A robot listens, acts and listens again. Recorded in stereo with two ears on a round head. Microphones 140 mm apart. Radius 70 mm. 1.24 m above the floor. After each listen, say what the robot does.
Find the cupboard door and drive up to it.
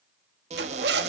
Turn 45° right.
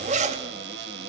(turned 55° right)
Turn 80° right.
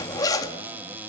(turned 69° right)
Turn 10° right.
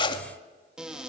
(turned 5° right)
Drive 1.0 m forward.
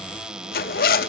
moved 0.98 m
Drive 1.0 m forward.
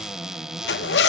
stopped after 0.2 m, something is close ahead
Arrived at the cupboard door, straight ahead.